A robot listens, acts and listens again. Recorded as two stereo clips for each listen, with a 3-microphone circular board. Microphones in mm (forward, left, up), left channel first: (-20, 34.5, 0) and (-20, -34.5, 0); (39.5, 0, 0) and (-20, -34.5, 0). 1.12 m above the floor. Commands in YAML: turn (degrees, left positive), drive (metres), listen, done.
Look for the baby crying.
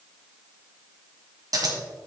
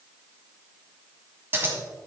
listen: true
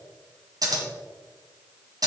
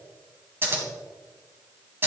listen: true
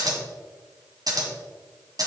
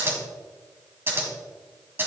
done: "I can't make out a baby crying, only scissors."